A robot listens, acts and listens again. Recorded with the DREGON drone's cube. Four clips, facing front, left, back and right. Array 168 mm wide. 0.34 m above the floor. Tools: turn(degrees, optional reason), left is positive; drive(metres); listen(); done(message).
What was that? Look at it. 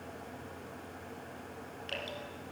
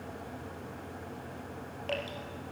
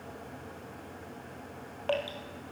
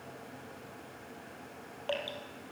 turn(degrees=-175, reason="The dripping: 175° right.")
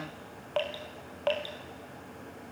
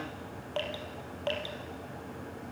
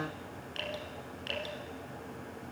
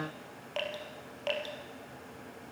done("Found it: dripping, straight ahead, 2 to 4 m away.")